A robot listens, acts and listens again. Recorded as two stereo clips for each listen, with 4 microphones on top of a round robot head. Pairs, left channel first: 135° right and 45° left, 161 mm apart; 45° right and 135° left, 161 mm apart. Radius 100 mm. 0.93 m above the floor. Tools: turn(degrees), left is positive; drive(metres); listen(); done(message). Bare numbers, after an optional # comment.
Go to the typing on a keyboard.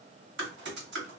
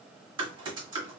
# The typing on a keyboard: 70° left.
turn(70)
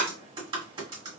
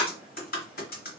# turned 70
# The typing on a keyboard is now 15° right.
turn(-15)
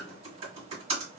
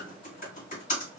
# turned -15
drive(1.0)
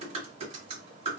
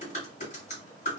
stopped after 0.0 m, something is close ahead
done("Something is in my way. I am facing the typing on a keyboard but have not reached it.")